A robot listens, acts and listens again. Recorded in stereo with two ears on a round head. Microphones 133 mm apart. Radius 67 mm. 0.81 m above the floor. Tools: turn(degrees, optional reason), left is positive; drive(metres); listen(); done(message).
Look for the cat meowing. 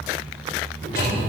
turn(degrees=-55, reason="The cat meowing: about 55° right or 125° right.")
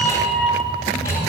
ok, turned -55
turn(degrees=15, reason="So it is at 15° left.")
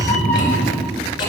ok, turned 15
turn(degrees=20, reason="The cat meowing is now 20° left.")
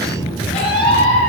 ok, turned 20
turn(degrees=40, reason="The cat meowing is now 40° left.")
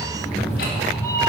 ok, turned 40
turn(degrees=20, reason="The cat meowing is now 20° left.")
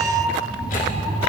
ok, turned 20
done("Found it: a cat meowing, straight ahead.")